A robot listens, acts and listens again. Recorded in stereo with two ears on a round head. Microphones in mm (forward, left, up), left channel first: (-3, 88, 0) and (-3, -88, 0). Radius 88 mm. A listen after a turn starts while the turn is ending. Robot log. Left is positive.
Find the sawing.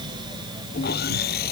note: The sawing: about 50° left or 130° left.
cmd yaw +50
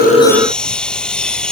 end: Found it: sawing, straight ahead.